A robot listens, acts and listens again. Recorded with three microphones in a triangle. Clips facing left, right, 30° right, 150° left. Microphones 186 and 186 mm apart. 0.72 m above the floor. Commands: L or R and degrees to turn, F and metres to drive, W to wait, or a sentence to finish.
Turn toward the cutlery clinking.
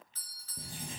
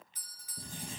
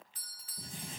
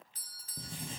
W
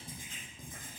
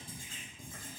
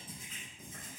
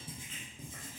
W
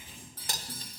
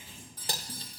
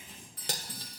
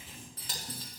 R30
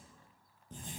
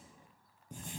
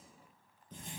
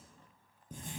W
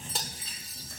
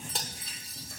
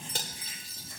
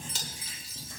Facing the cutlery clinking, 1 to 2 m away.